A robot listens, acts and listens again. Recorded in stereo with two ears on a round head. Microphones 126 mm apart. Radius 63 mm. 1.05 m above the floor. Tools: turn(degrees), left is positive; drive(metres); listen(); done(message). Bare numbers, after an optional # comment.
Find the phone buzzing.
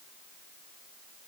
listen()
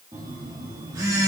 # The phone buzzing: about 25° right or 155° right.
turn(-25)
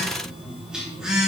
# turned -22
done("Facing the phone buzzing, 2 to 4 m away.")